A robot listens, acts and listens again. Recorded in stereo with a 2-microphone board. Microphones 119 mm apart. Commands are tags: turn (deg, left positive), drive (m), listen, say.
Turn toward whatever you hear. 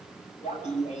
<turn deg="65"/>
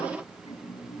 <turn deg="55"/>
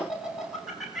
<say>Found it: laughter, straight ahead.</say>